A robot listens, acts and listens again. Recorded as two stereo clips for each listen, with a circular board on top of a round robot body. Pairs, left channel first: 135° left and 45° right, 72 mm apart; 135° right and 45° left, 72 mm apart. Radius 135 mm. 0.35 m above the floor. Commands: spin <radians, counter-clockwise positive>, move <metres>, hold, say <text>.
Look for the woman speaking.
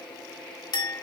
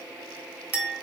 hold
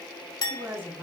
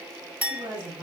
spin 0.26
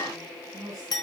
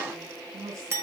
say Facing the woman speaking, 2 to 4 m away.